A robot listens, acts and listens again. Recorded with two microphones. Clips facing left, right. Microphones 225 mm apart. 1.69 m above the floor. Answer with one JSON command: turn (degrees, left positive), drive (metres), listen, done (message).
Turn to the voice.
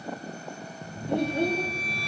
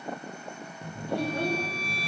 {"turn": 20}
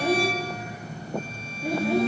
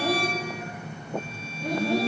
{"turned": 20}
{"done": "Facing the child speaking."}